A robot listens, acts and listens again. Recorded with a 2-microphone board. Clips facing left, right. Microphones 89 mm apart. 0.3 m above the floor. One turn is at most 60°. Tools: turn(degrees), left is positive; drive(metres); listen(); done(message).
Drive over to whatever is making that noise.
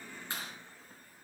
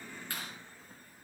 turn(degrees=25)
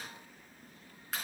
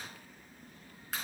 drive(metres=1.0)
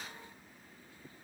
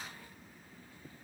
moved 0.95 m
listen()
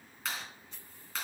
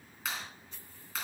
drive(metres=1.0)
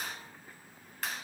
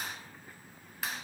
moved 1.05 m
drive(metres=1.0)
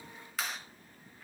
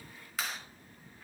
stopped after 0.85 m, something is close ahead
done("I am next to the clap.")